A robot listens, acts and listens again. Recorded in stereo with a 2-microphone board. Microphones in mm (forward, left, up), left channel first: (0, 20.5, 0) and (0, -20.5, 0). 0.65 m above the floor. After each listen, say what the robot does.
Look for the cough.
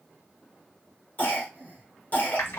Turn 40° left.
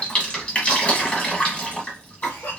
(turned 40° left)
Turn 95° left.
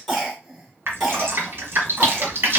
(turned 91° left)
Found it: a cough, straight ahead, 2 to 4 m away.